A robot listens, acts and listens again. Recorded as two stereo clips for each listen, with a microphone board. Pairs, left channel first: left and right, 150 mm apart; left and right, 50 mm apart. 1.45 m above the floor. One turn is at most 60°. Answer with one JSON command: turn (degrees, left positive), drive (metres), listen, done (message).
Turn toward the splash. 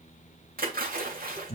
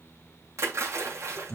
{"turn": -60}
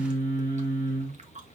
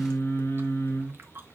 {"listen": true}
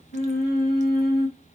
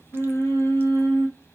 {"done": "I heard a splash, but can't make it out now. It was about 10° right or 50° right."}